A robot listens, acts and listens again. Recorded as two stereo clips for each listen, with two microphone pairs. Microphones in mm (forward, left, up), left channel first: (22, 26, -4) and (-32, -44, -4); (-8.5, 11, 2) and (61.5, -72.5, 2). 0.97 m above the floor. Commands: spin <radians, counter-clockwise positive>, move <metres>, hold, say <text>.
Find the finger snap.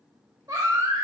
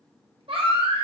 hold
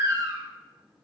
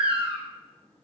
hold
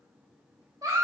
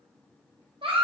say I can't make out a finger snap, only a baby crying.